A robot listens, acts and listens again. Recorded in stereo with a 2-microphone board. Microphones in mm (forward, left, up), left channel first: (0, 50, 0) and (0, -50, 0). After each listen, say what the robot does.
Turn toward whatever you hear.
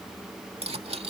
Turn 90° right.
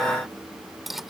Found it: cutlery clinking, straight ahead.